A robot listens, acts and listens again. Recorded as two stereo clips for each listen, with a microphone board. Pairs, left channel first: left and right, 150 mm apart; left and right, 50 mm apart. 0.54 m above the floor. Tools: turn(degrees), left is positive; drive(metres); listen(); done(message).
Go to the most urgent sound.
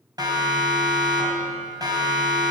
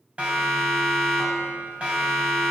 turn(degrees=-25)
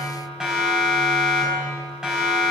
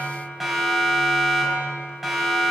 drive(metres=1.0)
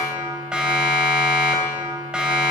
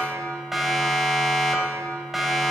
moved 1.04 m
drive(metres=1.0)
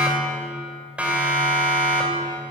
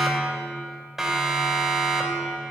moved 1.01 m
turn(degrees=-10)
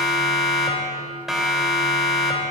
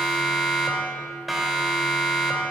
drive(metres=1.0)
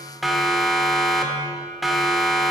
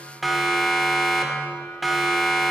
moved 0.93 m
drive(metres=1.0)
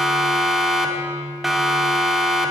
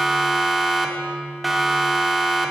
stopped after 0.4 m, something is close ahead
done("Arrived at the siren, straight ahead.")